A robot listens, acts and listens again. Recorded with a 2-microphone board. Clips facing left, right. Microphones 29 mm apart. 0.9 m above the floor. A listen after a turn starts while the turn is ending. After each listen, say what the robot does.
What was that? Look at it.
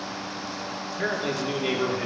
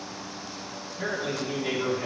Turn 50° left.
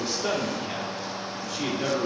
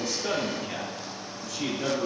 Turn 25° left.
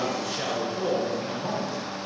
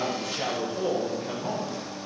Found it: a man speaking, straight ahead.